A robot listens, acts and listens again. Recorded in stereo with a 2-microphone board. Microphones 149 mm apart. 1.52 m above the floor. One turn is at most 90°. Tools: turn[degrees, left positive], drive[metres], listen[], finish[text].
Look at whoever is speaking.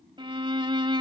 Action: listen[]
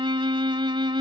Action: listen[]
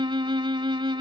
Action: finish[I can't make out anyone speaking, only a violin.]